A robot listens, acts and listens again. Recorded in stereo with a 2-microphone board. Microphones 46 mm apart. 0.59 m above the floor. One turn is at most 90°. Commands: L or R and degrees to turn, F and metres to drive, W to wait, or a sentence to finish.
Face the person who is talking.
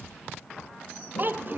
R45
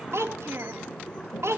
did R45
R85
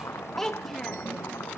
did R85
L10
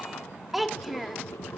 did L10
Facing the child speaking.